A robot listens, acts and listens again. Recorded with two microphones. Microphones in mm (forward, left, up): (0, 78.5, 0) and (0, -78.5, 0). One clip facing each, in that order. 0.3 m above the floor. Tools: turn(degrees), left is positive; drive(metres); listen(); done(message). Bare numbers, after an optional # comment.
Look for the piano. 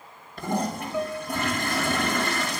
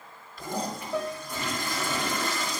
turn(-90)
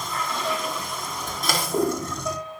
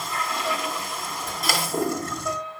# So it is at 10° left.
turn(10)
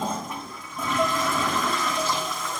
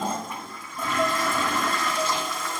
done("Facing the piano, over 4 m away.")